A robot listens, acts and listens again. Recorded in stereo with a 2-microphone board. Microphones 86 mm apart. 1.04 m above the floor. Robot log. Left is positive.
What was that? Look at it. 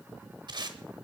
note: The tape being pulled: about 55° right or 125° right.
cmd yaw -55
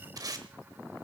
note: So it is at 55° right.
cmd yaw -55
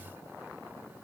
cmd idle
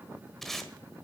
end: Found it: tape being pulled, straight ahead.